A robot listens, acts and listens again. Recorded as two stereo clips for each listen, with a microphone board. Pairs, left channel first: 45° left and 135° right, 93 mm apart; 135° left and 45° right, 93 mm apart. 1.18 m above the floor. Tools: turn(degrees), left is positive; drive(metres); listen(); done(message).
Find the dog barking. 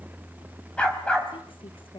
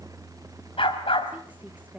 turn(degrees=125)
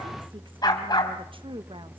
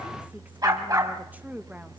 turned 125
done("Found it: a dog barking, straight ahead.")